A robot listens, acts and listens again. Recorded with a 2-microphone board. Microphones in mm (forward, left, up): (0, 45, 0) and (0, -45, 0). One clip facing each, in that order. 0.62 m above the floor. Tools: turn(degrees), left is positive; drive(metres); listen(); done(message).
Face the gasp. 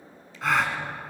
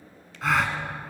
turn(degrees=30)
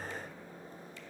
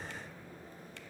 listen()
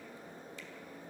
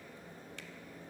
done("I heard a gasp, but can't make it out now. It was about 30° right or 150° left.")